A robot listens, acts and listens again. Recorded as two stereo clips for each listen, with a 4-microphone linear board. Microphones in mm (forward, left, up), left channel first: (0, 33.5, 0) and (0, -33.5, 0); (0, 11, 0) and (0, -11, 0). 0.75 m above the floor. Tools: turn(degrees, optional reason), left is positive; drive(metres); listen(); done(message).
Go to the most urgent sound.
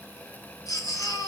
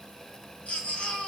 turn(degrees=65, reason="The baby crying: about 65° left or 115° left.")
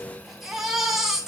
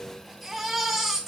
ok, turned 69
drive(metres=1.0)
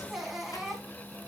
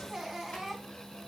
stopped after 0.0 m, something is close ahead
done("Blocked. The baby crying is further on, straight ahead.")